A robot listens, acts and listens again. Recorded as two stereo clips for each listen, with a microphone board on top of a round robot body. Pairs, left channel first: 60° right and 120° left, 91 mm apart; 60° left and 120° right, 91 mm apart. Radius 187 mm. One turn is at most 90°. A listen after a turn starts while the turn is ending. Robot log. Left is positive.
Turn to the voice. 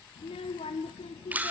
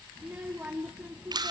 note: The child speaking: 45° right.
cmd yaw -45
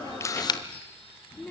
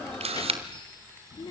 note: The child speaking is now 15° left.
cmd yaw +15
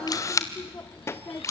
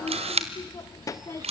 end: Found it: a child speaking, straight ahead, under 1 m away.